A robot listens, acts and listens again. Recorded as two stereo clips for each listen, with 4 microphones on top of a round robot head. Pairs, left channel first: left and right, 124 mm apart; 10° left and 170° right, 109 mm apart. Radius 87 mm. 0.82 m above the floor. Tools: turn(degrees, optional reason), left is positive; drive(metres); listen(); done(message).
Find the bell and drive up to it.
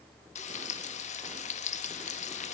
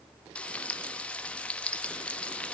listen()
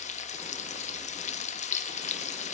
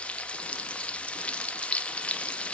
listen()
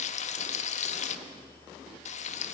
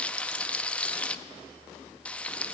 done("I can't make out a bell to turn to.")